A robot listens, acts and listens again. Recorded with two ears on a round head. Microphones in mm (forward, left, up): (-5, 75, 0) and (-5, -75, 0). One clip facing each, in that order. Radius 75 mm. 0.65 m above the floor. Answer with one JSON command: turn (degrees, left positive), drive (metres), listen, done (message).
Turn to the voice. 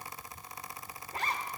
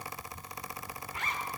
{"listen": true}
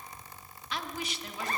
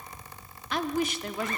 {"turn": -40}
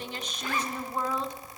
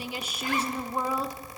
{"turn": -10}
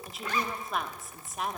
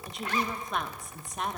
{"done": "Found it: a woman speaking, straight ahead, under 1 m away."}